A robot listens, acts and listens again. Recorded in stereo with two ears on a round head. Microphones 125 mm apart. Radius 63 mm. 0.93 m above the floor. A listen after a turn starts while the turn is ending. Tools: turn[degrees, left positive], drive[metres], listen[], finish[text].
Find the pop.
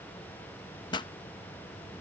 Thought: The pop: about 35° left or 145° left.
Action: turn[35]
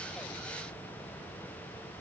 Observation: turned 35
Action: listen[]
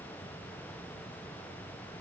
Action: finish[I heard a pop, but can't make it out now. It was about straight ahead or 110° left.]